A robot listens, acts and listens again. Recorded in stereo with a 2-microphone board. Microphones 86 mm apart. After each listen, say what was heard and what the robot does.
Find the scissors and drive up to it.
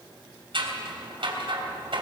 Turn 90° right.
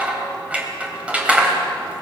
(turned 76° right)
So it is at 15° right. Turn 15° right.
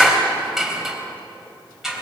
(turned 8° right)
Drive 1.0 m forward.
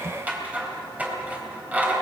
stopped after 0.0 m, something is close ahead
The scissors is now 20° right. Turn 20° right.
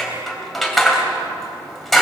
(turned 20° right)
Something is in my way. I am facing the scissors but have not reached it.